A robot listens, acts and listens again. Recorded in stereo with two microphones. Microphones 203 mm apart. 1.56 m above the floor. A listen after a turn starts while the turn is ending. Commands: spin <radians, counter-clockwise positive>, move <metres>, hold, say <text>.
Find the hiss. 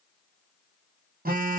hold
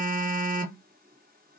hold
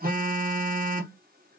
say I can't make out a hiss, only a phone buzzing.